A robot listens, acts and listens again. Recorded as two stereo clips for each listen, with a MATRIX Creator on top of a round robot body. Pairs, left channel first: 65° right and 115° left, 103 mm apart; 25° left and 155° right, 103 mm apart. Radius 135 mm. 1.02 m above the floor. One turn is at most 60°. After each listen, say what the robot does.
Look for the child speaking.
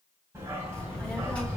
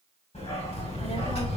Turn 10° left.
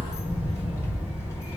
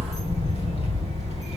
Keep listening.
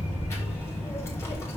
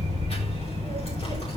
Keep listening.
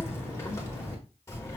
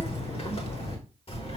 Found it: a child speaking, straight ahead, 2 to 4 m away.